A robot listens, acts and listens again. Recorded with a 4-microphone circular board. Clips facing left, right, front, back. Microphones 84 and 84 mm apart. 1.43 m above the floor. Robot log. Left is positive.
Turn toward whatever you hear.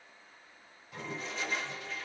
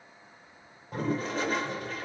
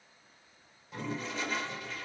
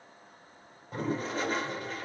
note: The toilet flushing: 135° right.
cmd yaw -135
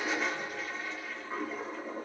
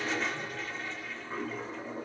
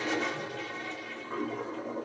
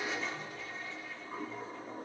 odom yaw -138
end: Found it: a toilet flushing, straight ahead, under 1 m away.